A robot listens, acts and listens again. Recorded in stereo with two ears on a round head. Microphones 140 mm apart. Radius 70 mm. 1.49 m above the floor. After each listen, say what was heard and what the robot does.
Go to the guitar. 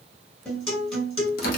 Turn 30° left.
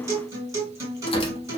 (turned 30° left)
So it is at 25° right. Turn 25° right.
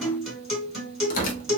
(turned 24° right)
Drive 1.0 m forward.
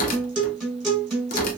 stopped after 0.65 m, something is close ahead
I am next to the guitar.